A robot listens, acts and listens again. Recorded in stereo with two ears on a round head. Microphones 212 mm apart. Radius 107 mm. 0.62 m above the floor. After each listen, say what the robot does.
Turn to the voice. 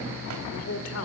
Turn 65° left.
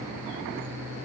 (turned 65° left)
Keep listening.
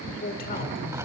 Turn 40° left.
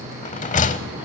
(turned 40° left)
Keep listening.
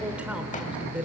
Facing the man speaking, 1 to 2 m away.